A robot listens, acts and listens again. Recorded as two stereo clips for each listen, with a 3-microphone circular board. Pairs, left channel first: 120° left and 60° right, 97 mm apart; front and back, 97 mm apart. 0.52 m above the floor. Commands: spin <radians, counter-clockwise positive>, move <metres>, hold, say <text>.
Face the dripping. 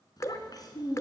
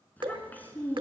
spin 2.97
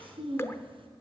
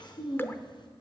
spin 1.05
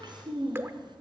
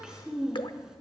say Found it: dripping, straight ahead, under 1 m away.